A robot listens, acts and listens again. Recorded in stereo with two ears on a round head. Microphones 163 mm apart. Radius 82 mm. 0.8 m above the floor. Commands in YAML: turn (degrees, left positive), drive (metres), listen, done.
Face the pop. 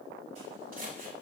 listen: true
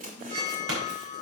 turn: -90
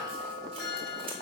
done: "Facing where the pop came from. I can't hear it now."